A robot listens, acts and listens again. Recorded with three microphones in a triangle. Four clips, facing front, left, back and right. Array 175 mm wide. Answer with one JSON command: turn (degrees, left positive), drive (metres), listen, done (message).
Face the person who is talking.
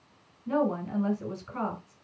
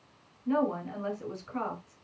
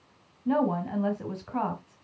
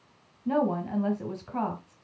{"turn": -150}
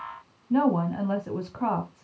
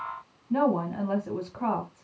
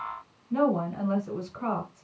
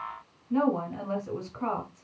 {"turn": 25}
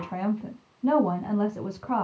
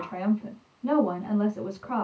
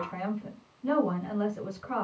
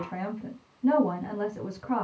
{"turn": -10}
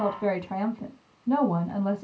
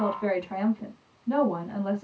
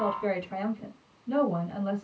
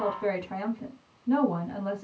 {"done": "Facing the woman speaking."}